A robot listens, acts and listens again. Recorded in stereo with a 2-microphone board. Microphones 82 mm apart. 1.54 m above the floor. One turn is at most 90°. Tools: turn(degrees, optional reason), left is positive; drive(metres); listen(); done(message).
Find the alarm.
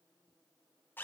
listen()
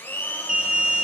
turn(degrees=-30)
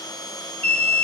turn(degrees=20, reason="So it is at 20° left.")
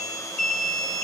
done("Facing the alarm.")